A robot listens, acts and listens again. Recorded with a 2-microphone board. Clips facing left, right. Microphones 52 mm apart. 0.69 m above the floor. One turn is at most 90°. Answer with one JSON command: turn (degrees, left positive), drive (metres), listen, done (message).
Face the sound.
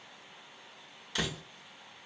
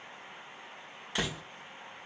{"turn": -20}
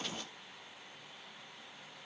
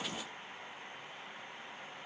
{"listen": true}
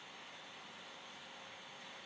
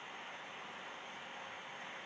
{"done": "I heard a door slam, but can't make it out now. It was about straight ahead or 140° right."}